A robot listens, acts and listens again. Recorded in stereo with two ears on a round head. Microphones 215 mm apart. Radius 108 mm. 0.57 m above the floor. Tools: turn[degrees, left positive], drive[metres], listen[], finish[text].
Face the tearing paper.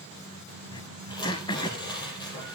Thought: The tearing paper: about 20° left or 160° left.
Action: turn[20]
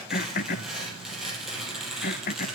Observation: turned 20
Action: finish[Found it: tearing paper, straight ahead.]